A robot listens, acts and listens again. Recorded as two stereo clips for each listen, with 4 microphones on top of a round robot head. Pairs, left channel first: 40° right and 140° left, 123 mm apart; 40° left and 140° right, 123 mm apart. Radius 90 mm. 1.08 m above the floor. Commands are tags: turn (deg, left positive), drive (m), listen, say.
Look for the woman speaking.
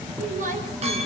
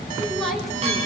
<turn deg="130"/>
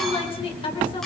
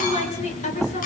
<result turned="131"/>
<turn deg="10"/>
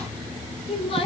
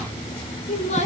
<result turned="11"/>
<say>Facing the woman speaking, over 4 m away.</say>